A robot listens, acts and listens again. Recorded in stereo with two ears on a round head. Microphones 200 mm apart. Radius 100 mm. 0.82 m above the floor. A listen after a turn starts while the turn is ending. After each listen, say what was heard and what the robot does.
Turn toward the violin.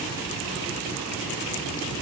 Keep listening.
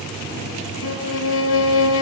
The violin: about 60° left or 120° left. Turn 60° left.
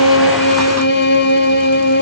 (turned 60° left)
So it is at 50° left. Turn 50° left.
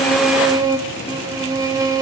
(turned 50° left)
The violin is now 20° right. Turn 20° right.
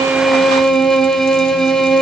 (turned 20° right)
Found it: a violin, straight ahead, 1 to 2 m away.